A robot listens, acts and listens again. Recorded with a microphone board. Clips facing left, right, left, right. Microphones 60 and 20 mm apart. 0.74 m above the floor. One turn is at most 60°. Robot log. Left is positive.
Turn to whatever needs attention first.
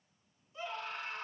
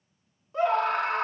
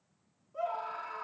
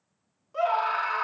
note: The scream: about 65° right or 115° right.
cmd yaw -60
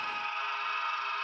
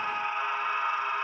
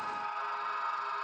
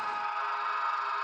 note: So it is at 20° right.
cmd yaw -20
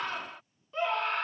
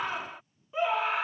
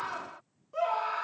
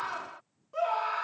note: The scream is now 10° right.
cmd yaw -10
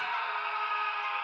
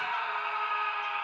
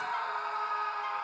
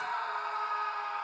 end: Found it: a scream, straight ahead.